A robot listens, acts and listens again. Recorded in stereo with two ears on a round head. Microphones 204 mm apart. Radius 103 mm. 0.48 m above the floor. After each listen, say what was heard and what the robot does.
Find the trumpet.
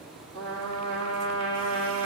The trumpet: about 25° left or 155° left. Turn 25° left.
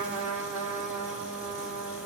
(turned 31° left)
Found it: a trumpet, straight ahead.